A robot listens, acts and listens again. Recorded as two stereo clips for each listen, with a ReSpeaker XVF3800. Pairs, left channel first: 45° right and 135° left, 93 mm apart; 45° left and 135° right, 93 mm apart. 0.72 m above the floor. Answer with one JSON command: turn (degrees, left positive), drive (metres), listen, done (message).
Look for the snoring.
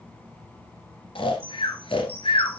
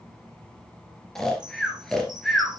{"turn": -40}
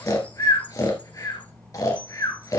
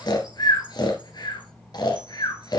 {"done": "Facing the snoring, 1 to 2 m away."}